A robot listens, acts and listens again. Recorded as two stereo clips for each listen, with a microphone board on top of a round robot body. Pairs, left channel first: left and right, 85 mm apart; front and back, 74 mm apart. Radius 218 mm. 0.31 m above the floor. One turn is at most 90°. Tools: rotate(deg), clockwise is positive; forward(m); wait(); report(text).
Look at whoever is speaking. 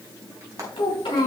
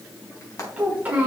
rotate(-90)
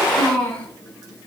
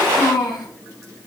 rotate(-15)
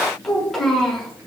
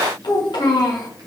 report("Found it: a child speaking, straight ahead, over 4 m away.")